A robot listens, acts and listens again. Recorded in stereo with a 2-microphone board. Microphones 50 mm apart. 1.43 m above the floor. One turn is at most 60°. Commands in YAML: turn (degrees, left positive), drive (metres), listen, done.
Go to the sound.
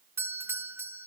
turn: -55
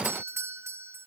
turn: -60
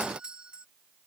turn: -20
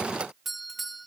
drive: 1.0
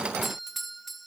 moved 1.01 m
drive: 1.0
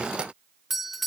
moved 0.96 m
drive: 1.0
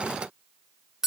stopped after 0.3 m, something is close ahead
turn: -10
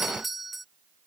done: "I am next to the doorbell."